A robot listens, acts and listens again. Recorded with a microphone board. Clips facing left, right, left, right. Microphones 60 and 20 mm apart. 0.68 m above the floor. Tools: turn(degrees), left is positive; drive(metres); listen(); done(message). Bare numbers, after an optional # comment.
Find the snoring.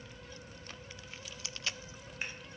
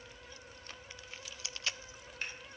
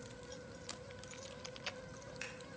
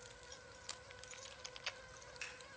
listen()
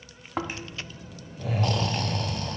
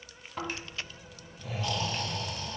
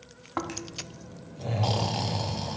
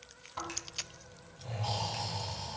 # The snoring: about 70° left or 110° left.
turn(70)
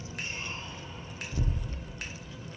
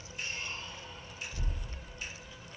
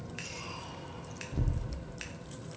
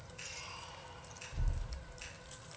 # So it is at 30° left.
turn(30)
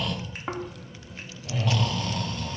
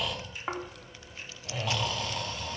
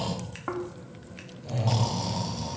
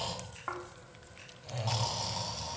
done("Facing the snoring, under 1 m away.")